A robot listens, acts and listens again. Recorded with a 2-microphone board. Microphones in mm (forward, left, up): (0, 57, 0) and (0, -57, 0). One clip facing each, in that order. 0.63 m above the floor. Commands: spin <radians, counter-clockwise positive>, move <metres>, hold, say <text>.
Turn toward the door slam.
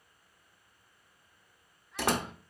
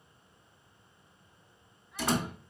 spin 1.13
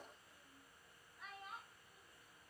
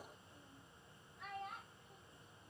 hold
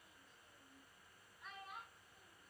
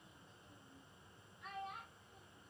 say I heard a door slam, but can't make it out now. It was about straight ahead or 50° left.